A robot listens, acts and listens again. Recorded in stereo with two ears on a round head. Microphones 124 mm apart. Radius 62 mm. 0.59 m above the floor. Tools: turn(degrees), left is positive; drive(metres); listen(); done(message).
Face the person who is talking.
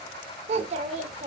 turn(degrees=-50)
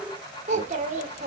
turn(degrees=-70)
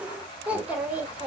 turn(degrees=-10)
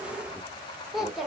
done("Facing the child speaking, 1 to 2 m away.")